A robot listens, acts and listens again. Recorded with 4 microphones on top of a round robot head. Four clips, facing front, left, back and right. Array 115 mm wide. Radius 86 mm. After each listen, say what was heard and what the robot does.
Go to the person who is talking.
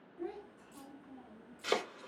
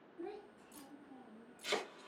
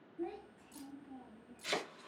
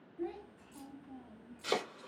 The child speaking: 30° left. Turn 30° left.
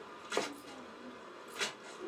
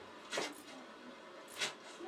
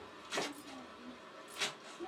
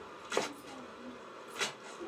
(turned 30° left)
The child speaking is now 10° right. Turn 10° right.
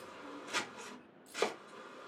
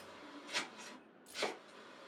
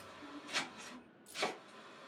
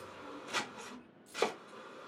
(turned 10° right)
Keep listening.
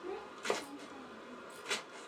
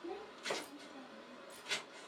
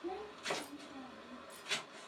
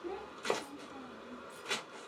Drive 1.0 m forward.
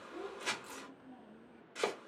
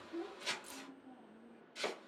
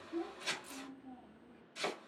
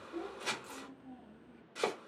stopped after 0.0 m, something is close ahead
The child speaking is now 10° left. Turn 10° left.
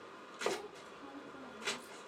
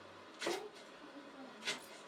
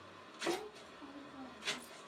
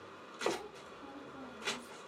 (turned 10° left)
Blocked. The child speaking is further on, straight ahead.